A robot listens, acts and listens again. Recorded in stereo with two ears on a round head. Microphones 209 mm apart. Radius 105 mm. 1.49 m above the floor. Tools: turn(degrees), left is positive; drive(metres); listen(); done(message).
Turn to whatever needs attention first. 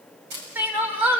turn(degrees=-30)
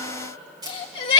turn(degrees=25)
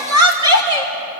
turn(degrees=-20)
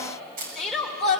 done("Facing the crying, 2 to 4 m away.")